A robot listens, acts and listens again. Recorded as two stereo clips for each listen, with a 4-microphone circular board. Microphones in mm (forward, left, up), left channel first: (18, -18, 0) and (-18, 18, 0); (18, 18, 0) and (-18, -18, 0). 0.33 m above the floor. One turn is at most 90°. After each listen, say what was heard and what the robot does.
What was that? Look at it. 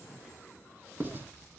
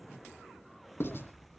The writing: 85° left. Turn 85° left.
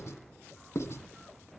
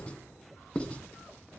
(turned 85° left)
The writing is now 20° right. Turn 20° right.
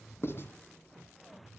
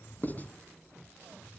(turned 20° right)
Found it: writing, straight ahead.